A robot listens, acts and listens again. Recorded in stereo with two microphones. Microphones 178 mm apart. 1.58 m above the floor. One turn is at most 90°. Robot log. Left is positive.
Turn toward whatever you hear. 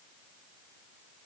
cmd idle
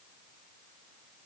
cmd idle
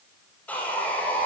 cmd yaw +30
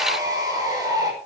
note: So it is at 20° right.
cmd yaw -20
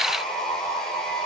end: Facing the sawing, over 4 m away.